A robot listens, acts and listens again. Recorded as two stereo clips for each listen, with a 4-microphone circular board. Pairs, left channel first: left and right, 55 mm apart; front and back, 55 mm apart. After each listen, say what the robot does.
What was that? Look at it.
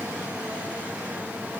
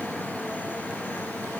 Keep listening.
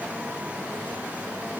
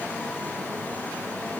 Keep listening.
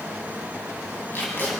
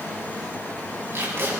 Turn 140° left.
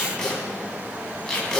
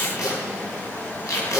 Turn 10° left.
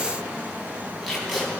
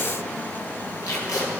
Facing the tape being pulled.